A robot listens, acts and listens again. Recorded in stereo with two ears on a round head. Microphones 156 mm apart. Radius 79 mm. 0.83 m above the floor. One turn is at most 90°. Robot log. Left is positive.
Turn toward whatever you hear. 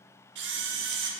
note: The camera shutter: about 70° right or 110° right.
cmd yaw -70
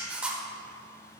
end: Found it: a camera shutter, straight ahead.